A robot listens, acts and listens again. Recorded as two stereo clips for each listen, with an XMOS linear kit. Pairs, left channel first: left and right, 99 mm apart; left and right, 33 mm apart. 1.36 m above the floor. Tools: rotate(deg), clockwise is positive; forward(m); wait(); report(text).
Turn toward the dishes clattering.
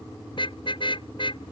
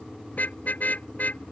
wait()
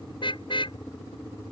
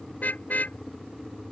wait()
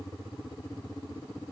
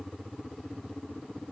report("I can't make out dishes clattering to turn to.")